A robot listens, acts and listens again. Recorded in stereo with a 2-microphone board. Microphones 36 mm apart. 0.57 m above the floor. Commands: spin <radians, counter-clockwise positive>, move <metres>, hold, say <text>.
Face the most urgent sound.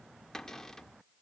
hold
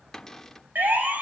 spin -1.05
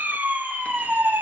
spin -1.05
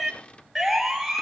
say Found it: a siren, straight ahead.